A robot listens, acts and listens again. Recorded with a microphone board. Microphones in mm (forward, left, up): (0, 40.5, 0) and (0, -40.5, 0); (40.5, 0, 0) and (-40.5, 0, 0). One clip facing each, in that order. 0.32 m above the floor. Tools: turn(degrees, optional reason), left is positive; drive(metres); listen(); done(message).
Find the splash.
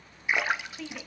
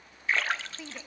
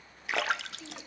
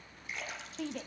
turn(degrees=15, reason="The splash: 15° left.")
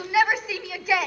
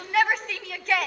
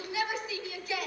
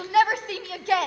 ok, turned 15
done("Facing where the splash came from. I can't hear it now.")